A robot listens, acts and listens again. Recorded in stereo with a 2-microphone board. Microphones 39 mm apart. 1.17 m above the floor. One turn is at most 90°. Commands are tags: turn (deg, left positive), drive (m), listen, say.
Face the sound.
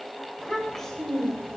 <turn deg="30"/>
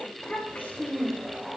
<turn deg="90"/>
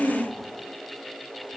<turn deg="10"/>
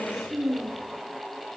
<turn deg="-20"/>
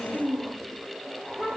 <say>Facing the child speaking.</say>